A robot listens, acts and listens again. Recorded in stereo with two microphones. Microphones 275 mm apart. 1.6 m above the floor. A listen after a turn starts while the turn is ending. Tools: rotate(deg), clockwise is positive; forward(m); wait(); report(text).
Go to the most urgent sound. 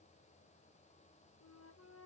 wait()
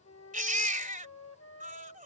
rotate(30)
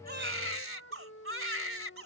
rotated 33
rotate(115)
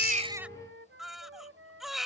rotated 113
forward(1.0)
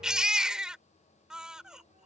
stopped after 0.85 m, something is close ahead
report("I am next to the baby crying.")